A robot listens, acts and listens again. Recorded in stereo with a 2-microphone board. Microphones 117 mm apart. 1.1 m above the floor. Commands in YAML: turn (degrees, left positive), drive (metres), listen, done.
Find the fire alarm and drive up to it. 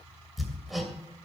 listen: true
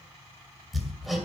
listen: true
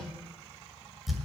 done: "I can't make out a fire alarm, only hammering."